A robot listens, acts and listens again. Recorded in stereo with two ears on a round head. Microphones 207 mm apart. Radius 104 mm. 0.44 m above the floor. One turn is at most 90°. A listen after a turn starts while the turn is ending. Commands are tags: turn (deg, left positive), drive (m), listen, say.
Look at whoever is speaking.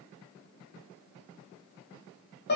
<listen/>
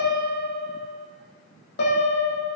<listen/>
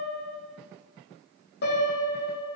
<say>I can't make out anyone speaking, only a piano.</say>